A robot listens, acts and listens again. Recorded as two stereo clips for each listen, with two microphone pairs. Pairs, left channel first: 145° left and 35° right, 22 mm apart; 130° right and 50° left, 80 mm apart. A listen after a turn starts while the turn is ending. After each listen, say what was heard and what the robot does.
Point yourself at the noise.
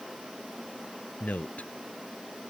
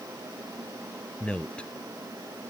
The man speaking: 150° left. Turn 150° left.
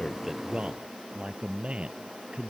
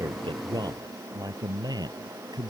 The man speaking is now 10° left. Turn 10° left.
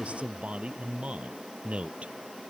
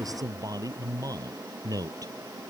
Found it: a man speaking, straight ahead.